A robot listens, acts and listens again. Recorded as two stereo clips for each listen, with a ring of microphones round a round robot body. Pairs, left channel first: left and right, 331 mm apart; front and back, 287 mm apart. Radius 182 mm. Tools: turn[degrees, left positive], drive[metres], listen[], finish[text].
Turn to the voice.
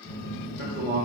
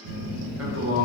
Thought: The man speaking: 150° right.
Action: turn[-150]
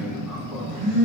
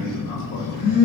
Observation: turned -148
Action: listen[]
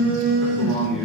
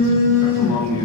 Action: listen[]
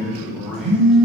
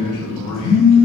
Action: finish[Found it: a man speaking, straight ahead.]